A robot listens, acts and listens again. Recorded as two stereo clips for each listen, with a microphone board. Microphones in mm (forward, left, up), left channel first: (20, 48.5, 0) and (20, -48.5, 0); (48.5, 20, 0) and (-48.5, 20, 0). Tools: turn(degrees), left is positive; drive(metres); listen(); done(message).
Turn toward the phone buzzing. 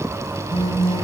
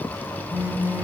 turn(degrees=110)
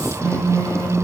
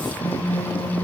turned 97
turn(degrees=15)
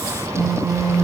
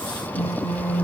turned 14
done("Facing the phone buzzing.")